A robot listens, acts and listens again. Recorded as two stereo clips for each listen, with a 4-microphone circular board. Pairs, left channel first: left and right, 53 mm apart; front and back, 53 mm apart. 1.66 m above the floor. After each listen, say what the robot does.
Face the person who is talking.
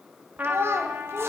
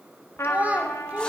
Turn 120° right.
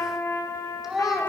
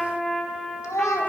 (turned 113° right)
Turn 10° right.
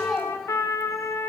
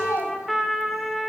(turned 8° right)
Found it: a child speaking, straight ahead, 2 to 4 m away.